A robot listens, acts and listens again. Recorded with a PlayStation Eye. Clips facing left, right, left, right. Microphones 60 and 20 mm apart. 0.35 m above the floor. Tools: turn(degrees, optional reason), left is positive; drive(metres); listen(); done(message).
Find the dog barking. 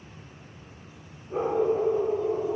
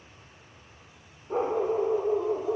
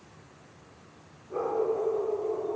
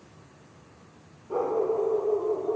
turn(degrees=-75, reason="The dog barking: about 75° right or 105° right.")
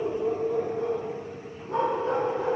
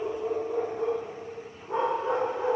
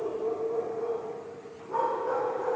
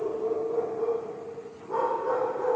turn(degrees=-20, reason="So it is at 20° right.")
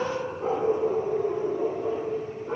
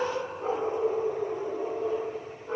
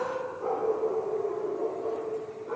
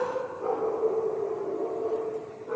done("Facing the dog barking, over 4 m away.")